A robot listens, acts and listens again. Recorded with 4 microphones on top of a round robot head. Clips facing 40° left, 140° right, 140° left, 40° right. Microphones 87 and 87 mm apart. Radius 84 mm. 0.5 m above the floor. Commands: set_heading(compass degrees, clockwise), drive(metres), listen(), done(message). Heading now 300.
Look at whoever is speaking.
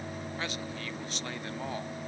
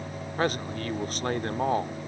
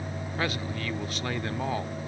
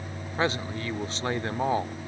set_heading(40)
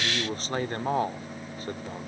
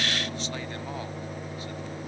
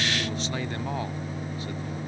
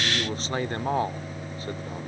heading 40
done("Facing the man speaking.")